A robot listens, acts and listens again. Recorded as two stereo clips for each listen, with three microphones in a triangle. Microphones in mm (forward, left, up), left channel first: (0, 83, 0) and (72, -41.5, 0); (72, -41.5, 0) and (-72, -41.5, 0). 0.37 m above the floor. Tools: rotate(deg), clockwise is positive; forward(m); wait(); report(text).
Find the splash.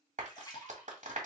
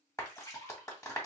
rotate(-65)
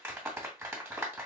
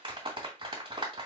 report("I heard a splash from this way, but can't make it out now.")